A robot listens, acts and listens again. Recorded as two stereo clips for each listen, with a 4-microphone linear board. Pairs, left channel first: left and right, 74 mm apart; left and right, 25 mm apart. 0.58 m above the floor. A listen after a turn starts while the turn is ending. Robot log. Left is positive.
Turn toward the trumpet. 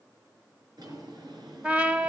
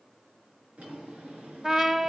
note: The trumpet: about 20° right or 160° right.
cmd yaw -20
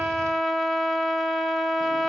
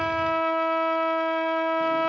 end: Facing the trumpet, 1 to 2 m away.